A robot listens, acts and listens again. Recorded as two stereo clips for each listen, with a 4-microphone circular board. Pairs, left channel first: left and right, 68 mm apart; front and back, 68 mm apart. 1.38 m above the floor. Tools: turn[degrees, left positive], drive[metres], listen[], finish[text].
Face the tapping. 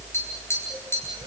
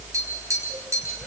Thought: The tapping: 140° left.
Action: turn[140]
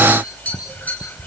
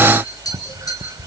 Thought: The tapping is now 20° left.
Action: turn[20]
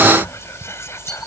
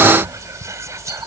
Action: listen[]
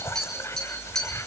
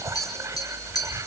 Action: finish[Found it: tapping, straight ahead, over 4 m away.]